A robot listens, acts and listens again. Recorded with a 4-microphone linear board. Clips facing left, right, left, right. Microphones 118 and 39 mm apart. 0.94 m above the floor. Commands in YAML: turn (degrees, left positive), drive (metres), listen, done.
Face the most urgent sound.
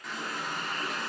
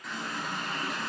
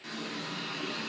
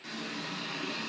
listen: true
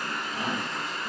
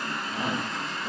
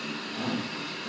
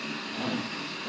turn: -30
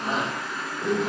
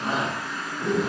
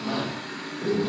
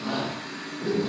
done: "Found it: a shout, straight ahead."